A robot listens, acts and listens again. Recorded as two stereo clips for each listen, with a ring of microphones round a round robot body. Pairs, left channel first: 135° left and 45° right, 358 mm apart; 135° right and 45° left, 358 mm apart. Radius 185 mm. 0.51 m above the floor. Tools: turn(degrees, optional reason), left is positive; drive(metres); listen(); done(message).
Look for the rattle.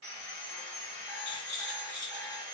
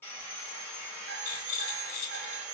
turn(degrees=-105, reason="The rattle: 105° right.")
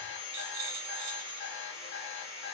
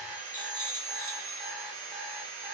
listen()
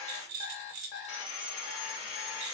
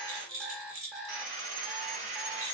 turn(degrees=-10, reason="The rattle is now 10° right.")
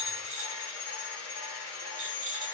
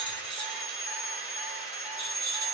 listen()
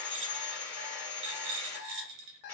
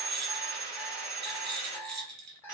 done("Facing the rattle, under 1 m away.")